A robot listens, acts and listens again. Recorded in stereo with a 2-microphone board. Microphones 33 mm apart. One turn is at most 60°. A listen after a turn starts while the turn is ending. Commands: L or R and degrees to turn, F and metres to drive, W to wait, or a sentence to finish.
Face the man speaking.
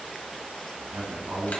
R60
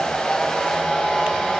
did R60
W
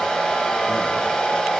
W
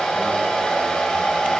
I heard a man speaking, but can't make it out now. It was about 5° right or 55° right.